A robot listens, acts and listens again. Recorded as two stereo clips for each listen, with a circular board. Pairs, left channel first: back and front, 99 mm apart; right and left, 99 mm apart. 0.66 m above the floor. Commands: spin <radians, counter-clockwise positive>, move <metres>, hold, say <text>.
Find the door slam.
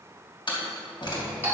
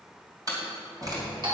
spin 2.44
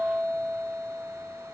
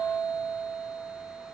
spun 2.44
say I heard a door slam from this way, but can't make it out now.